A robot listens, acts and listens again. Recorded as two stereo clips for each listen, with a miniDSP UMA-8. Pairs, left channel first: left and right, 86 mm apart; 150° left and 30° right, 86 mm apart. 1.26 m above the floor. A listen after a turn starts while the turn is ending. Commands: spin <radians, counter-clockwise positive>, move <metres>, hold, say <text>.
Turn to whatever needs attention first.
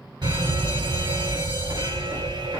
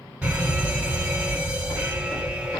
spin -1.83
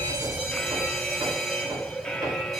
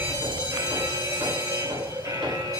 say Facing the fire alarm, 2 to 4 m away.